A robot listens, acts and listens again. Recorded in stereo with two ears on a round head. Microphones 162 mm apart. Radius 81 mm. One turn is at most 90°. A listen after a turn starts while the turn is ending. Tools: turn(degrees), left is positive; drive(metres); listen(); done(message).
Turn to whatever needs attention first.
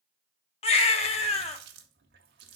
turn(degrees=35)
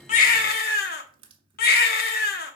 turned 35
turn(degrees=90)
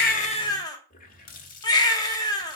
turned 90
turn(degrees=25)
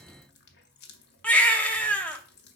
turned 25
turn(degrees=10)
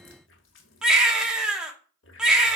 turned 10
done("Found it: a baby crying, straight ahead, 1 to 2 m away.")